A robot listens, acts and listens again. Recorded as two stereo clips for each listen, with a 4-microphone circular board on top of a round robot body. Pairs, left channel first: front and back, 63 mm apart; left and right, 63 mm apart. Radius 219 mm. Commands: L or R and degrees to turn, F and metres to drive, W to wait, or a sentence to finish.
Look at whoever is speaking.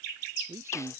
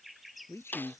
L135
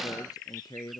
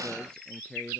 L10
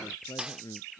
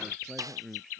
Facing the man speaking.